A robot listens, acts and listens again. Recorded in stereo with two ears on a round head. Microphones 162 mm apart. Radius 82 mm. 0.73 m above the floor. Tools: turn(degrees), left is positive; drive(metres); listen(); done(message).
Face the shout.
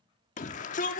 turn(degrees=40)
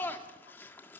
turn(degrees=10)
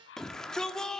done("Found it: a shout, straight ahead, 1 to 2 m away.")